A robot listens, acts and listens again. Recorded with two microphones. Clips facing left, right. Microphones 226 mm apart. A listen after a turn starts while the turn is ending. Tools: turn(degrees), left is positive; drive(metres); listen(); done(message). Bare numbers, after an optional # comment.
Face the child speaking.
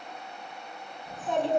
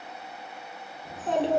# The child speaking: about 70° right or 110° right.
turn(-70)
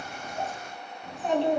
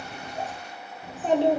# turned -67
# So it is at 40° right.
turn(-40)
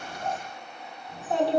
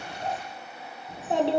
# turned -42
# The child speaking is now 25° right.
turn(-25)
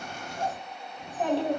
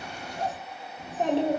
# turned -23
# The child speaking is now 30° right.
turn(-30)
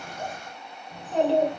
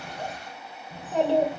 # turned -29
# The child speaking is now 10° right.
turn(-10)
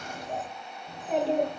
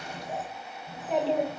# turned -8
done("Found it: a child speaking, straight ahead.")